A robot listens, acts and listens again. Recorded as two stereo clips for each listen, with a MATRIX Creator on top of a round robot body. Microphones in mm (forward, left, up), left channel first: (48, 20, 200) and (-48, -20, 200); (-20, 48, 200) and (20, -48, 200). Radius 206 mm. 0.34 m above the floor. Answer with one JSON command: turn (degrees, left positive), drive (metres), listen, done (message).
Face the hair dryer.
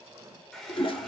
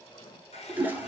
{"turn": 110}
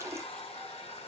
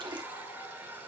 {"done": "Facing the hair dryer."}